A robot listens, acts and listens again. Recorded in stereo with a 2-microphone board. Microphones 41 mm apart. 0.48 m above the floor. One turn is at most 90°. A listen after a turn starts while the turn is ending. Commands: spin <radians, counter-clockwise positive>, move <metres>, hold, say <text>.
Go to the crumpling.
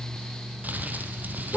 spin -0.79
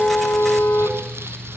hold
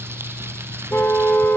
hold
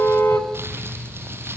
spin -1.57
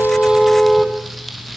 move 1.0
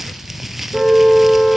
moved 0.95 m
move 1.0
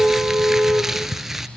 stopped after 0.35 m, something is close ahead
spin -0.17
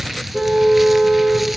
say I am next to the crumpling.